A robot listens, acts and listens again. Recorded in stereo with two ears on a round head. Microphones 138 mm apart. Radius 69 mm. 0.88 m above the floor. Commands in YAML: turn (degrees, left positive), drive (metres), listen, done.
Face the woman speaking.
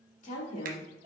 turn: 50
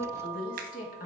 turn: 45
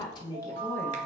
turn: 20
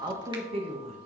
turn: -45
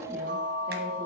listen: true
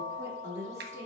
turn: -20
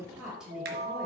done: "Found it: a woman speaking, straight ahead."